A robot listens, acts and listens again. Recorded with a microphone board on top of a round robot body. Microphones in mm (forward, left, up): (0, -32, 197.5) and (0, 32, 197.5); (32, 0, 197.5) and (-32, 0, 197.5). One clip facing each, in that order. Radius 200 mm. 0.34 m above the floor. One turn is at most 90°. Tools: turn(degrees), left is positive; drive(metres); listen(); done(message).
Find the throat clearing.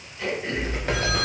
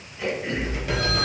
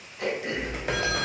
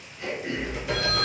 turn(degrees=10)
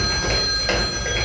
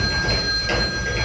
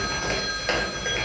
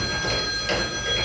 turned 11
listen()
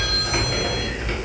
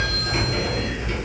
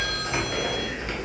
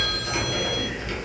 listen()
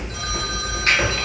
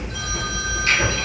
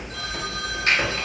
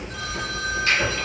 done("I heard throat clearing from this way, but can't make it out now.")